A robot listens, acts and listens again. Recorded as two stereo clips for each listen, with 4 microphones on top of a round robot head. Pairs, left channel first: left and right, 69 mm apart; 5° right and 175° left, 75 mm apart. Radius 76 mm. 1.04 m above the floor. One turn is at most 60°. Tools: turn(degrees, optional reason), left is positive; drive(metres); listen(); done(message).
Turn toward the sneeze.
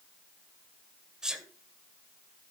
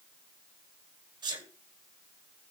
turn(degrees=-60, reason="The sneeze: 170° right.")
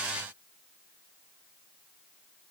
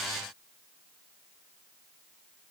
turn(degrees=-60, reason="Nothing new. It was at 110° right.")
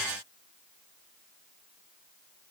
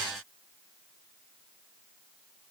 turn(degrees=-50, reason="Nothing new. It was at 50° right.")
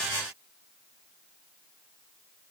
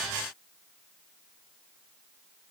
done("Facing where the sneeze came from. I can't hear it now.")